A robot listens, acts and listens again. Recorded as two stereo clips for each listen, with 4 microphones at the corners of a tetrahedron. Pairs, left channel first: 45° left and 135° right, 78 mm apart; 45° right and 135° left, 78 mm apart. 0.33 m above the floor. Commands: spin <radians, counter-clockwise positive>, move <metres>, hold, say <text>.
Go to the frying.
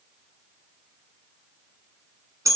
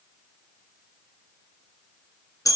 hold
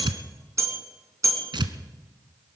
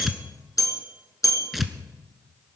hold
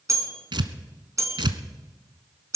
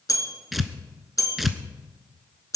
say I can't make out frying, only a bell and tearing paper.